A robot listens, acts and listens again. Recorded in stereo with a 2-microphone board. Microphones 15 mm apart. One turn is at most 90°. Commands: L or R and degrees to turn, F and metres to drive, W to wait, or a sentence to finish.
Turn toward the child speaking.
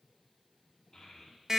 L60
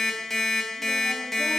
W
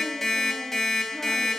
W
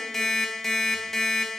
I heard a child speaking, but can't make it out now. It was about straight ahead or 60° left.